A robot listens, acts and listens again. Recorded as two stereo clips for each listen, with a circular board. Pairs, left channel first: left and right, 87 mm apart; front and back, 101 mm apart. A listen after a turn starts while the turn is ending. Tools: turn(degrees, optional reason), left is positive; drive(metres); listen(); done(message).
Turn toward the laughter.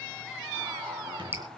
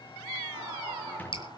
turn(degrees=-110, reason="The laughter: 110° right.")
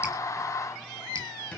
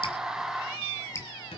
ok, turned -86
turn(degrees=-25, reason="Nothing new. It was at 25° right.")
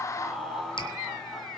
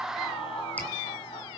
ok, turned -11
done("Facing the laughter.")